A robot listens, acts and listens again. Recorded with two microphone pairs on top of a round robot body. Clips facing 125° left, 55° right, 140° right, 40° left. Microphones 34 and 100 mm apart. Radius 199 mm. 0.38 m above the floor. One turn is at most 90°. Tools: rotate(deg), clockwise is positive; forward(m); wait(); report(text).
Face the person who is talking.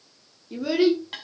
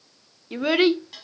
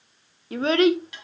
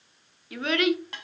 rotate(85)
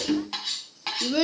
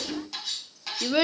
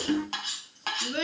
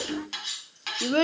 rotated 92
report("Facing the child speaking, under 1 m away.")